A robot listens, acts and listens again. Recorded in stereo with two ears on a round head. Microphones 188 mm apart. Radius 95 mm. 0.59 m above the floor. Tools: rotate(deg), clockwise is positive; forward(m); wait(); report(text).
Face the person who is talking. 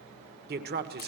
rotate(50)
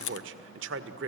rotate(75)
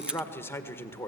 rotate(-10)
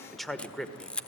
report("Found it: a man speaking, straight ahead.")